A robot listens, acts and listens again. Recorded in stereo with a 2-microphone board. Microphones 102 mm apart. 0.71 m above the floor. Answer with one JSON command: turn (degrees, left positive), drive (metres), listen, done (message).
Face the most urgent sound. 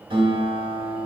{"listen": true}
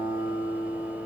{"listen": true}
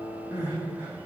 {"turn": -20}
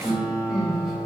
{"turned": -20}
{"done": "Facing the crying, 1 to 2 m away."}